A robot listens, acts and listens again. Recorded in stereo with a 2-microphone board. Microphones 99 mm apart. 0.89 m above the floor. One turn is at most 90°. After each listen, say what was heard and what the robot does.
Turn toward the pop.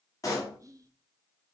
The pop: about 35° left or 145° left. Turn 35° left.
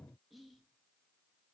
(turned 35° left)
Keep listening.
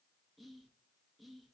I heard a pop, but can't make it out now. It was about straight ahead or 110° left.